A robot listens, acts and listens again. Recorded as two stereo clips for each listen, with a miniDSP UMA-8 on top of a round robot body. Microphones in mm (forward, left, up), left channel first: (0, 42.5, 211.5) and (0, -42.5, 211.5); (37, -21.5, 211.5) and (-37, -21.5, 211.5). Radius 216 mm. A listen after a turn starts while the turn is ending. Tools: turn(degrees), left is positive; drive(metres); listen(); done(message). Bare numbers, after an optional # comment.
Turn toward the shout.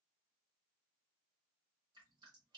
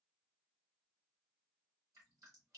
listen()
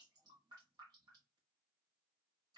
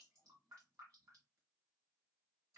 listen()
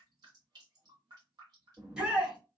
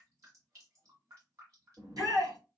# The shout: 170° right.
turn(-170)
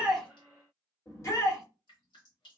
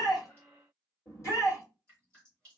# The shout is now 40° left.
turn(40)
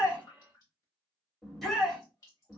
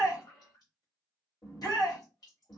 done("Facing the shout, 1 to 2 m away.")